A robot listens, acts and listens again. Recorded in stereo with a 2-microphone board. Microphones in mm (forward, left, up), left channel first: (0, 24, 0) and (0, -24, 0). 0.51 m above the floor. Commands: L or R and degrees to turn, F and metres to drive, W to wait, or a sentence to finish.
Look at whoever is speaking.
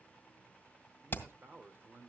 R55
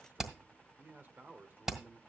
R55
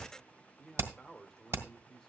L10
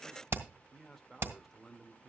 Found it: a man speaking, straight ahead, 1 to 2 m away.